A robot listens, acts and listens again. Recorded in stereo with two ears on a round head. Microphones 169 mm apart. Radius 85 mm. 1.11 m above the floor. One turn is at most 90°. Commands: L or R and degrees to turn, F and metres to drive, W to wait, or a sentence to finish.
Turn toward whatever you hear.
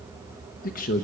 L45
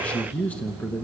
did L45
L10
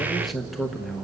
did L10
Found it: a man speaking, straight ahead.